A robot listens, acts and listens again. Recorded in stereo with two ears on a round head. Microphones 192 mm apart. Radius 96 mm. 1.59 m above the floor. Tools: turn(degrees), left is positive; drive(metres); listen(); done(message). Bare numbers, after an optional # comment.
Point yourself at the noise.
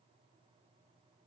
listen()
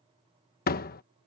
# The door slam: about 45° left or 135° left.
turn(45)
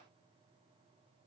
listen()
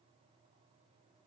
done("I heard a door slam, but can't make it out now. It was about straight ahead or 90° left.")